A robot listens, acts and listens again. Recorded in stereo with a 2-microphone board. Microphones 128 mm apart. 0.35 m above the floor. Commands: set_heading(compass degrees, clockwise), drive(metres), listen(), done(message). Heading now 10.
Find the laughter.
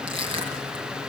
listen()
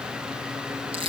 listen()
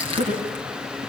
set_heading(100)
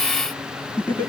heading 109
set_heading(94)
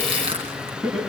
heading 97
done("Found it: laughter, straight ahead, over 4 m away.")